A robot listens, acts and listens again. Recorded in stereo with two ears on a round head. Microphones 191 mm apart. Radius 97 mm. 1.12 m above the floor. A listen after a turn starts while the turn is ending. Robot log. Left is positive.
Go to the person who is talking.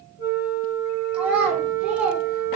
cmd yaw -30
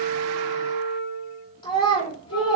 note: So it is at 25° left.
cmd yaw +25
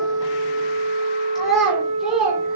cmd fwd 1.0
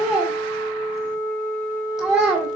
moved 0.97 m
cmd fwd 1.0
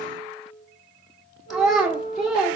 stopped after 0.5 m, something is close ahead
end: I am next to the child speaking.